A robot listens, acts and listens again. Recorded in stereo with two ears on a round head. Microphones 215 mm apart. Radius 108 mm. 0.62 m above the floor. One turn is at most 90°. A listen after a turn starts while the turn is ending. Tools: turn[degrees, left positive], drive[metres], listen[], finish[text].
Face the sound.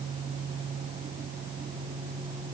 Action: listen[]
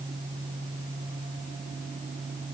Action: listen[]
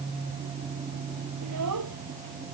Action: turn[-90]
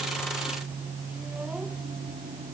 Action: listen[]
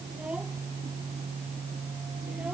Action: finish[Facing the child speaking.]